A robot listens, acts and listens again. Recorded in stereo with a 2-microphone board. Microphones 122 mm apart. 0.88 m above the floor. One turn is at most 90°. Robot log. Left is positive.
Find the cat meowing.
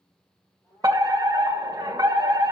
note: The cat meowing: about 30° left or 150° left.
cmd yaw +30
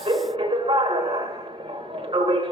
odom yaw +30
cmd idle
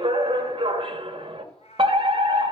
note: So it is at 110° left.
cmd yaw +90
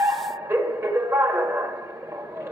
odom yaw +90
note: Nothing new. It was at 20° left.
cmd yaw +20
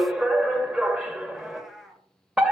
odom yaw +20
end: Facing the cat meowing, 1 to 2 m away.